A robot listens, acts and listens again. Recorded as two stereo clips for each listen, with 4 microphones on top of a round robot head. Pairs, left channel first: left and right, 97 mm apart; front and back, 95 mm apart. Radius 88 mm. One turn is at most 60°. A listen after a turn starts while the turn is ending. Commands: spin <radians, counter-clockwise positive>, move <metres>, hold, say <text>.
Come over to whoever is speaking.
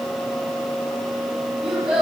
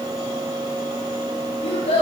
move 1.0
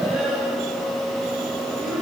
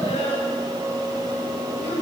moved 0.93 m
move 1.0
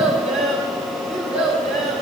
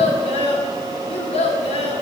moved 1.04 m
move 1.0
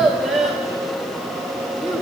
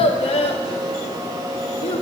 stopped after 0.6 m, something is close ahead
say Arrived at the child speaking, straight ahead.